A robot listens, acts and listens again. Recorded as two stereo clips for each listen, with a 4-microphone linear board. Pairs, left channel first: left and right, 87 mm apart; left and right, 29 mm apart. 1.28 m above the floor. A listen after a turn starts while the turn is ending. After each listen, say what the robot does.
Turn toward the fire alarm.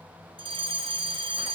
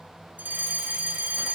Turn 90° right.
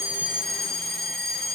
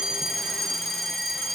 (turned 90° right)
Facing the fire alarm, over 4 m away.